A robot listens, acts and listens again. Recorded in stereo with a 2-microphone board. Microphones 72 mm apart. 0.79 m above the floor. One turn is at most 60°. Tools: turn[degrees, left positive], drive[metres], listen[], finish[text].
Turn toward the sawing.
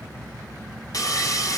Thought: The sawing: about 50° left or 130° left.
Action: turn[50]
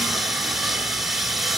Action: finish[Facing the sawing, 1 to 2 m away.]